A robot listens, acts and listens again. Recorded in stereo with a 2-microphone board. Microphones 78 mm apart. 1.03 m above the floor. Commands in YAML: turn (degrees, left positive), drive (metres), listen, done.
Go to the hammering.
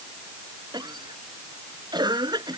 listen: true
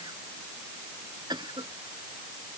listen: true
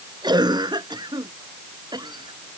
done: "I can't make out hammering to turn to."